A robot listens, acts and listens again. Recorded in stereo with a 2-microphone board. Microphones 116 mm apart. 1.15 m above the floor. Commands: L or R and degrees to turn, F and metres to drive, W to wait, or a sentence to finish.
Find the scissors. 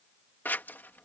L20
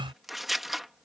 Found it: scissors, straight ahead.